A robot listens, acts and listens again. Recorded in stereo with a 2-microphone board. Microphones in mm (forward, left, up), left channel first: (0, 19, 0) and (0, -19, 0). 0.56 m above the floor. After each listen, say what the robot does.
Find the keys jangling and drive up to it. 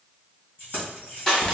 Turn 50° left.
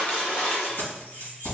Turn 80° left.
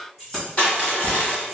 Drive 1.0 m forward.
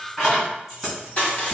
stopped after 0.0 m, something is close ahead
Something is in my way. I am facing the keys jangling but have not reached it.